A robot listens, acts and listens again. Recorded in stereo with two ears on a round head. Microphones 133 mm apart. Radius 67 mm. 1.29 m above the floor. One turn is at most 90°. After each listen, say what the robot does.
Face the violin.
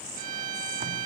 Turn 50° right.
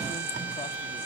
Turn 15° right.
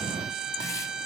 Found it: a violin, straight ahead.